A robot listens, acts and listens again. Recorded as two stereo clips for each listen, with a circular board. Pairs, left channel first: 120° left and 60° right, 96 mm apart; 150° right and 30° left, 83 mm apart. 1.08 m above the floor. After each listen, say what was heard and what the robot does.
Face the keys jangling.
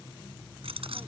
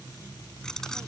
The keys jangling: 65° right. Turn 65° right.
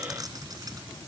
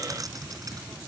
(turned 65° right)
The keys jangling is now 10° right. Turn 10° right.
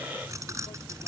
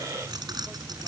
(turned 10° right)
Facing the keys jangling.